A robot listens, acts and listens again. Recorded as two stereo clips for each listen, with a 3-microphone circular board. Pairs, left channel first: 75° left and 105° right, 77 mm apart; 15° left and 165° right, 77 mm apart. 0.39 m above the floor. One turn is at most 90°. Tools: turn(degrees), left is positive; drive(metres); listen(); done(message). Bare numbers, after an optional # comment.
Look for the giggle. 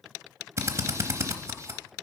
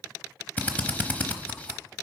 listen()
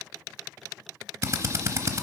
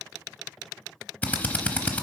listen()
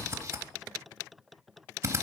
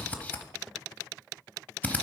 done("I can't make out a giggle, only a drill.")